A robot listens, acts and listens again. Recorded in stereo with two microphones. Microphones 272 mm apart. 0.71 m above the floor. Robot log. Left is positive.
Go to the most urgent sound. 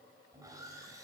cmd idle
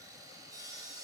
cmd idle
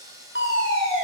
note: The fire alarm: about 50° left or 130° left.
cmd yaw +50
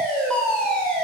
cmd fwd 1.0
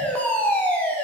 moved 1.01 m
cmd fwd 1.0
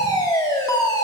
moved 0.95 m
note: The fire alarm is now 20° left.
cmd yaw +20
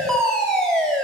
cmd fwd 1.0
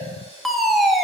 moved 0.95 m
cmd fwd 1.0
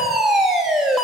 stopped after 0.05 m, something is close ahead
end: I am next to the fire alarm.